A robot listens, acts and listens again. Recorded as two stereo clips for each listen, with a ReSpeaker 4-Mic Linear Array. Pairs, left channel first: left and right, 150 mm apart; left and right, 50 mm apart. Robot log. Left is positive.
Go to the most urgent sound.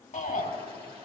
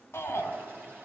note: The shout: about 55° left or 125° left.
cmd yaw +55
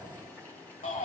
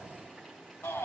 note: So it is at 65° left.
cmd yaw +65
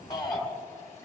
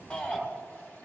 note: The shout is now 30° left.
cmd yaw +30
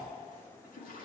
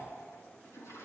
cmd idle
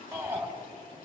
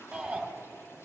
note: The shout is now 15° right.
cmd yaw -15
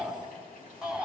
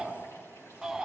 cmd fwd 1.0
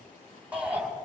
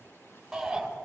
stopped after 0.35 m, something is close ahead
note: The shout is now 10° right.
cmd yaw -10
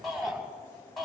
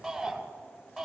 end: Blocked. The shout is further on, straight ahead.